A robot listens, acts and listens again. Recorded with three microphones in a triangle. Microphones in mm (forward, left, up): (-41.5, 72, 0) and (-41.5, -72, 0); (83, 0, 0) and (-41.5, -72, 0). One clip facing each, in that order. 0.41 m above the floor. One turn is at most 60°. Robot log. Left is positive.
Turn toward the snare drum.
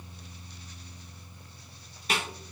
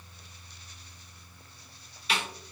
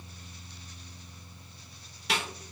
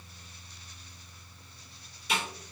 note: The snare drum: 45° left.
cmd yaw +45
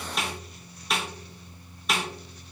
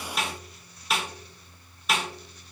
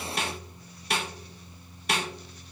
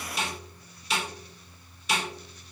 end: Found it: a snare drum, straight ahead.